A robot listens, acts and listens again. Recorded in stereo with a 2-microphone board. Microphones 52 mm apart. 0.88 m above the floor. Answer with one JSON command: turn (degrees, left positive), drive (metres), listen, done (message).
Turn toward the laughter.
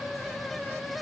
{"listen": true}
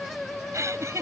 {"turn": -65}
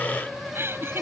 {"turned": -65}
{"turn": -50}
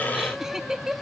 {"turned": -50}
{"turn": -10}
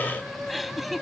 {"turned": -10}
{"done": "Found it: laughter, straight ahead."}